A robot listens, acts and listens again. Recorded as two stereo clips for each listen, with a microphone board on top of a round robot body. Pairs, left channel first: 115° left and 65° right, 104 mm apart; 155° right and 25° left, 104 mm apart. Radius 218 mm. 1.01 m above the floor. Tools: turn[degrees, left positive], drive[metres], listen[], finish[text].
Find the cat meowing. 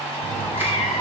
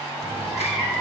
Thought: The cat meowing: 120° left.
Action: turn[120]
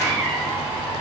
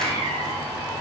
Thought: The cat meowing is now 25° left.
Action: turn[25]
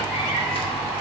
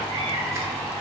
Action: finish[Facing the cat meowing.]